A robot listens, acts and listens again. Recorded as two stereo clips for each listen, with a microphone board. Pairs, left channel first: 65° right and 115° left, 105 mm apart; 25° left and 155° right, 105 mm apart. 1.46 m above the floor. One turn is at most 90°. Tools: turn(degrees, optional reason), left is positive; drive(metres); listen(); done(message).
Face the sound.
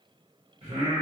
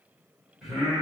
turn(degrees=90, reason="The singing: 115° left.")
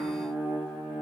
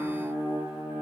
turn(degrees=50, reason="The singing is now 50° left.")
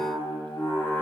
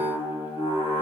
turn(degrees=15, reason="The singing is now 15° left.")
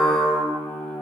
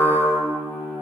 turn(degrees=20, reason="The singing is now 20° left.")
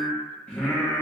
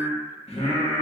turn(degrees=20, reason="The singing is now 20° left.")
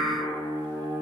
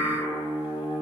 done("Found it: singing, straight ahead, 1 to 2 m away.")